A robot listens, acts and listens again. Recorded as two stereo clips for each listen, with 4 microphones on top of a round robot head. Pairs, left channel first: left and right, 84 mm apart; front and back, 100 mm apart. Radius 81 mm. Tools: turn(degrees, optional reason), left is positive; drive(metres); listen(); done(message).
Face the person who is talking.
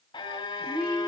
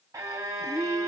turn(degrees=-80, reason="The woman speaking: 80° right.")
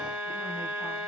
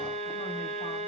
listen()
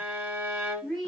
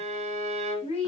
done("Found it: a woman speaking, straight ahead, 2 to 4 m away.")